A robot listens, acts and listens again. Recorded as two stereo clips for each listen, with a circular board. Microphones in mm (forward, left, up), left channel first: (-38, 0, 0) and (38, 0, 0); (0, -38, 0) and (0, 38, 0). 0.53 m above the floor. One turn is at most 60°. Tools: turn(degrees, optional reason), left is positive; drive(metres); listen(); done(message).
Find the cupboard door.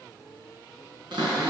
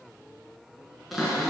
done("Facing the cupboard door.")